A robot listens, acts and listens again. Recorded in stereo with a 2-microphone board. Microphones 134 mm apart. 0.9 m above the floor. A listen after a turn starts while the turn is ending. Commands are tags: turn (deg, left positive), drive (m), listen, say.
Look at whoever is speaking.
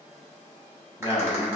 <turn deg="30"/>
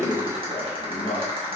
<turn deg="120"/>
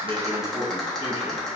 <turn deg="-20"/>
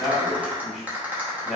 <say>Facing the man speaking.</say>